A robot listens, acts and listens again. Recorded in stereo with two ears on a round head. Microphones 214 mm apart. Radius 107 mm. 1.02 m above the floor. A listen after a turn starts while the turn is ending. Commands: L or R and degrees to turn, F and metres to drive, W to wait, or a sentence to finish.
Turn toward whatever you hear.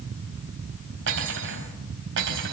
R55
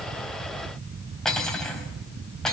Found it: cutlery clinking, straight ahead.